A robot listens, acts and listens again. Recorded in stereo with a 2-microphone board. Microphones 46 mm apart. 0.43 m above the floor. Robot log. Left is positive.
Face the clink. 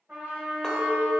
note: The clink: about 15° left or 165° left.
cmd yaw +15
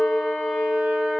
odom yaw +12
note: So it is at 155° left.
cmd yaw +155
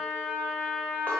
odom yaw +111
note: Nothing new. It was at 45° left.
cmd yaw +45
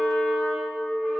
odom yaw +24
note: The clink is now 15° left.
cmd yaw +15
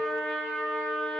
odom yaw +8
cmd idle
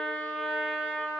cmd idle
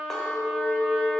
end: Facing the clink.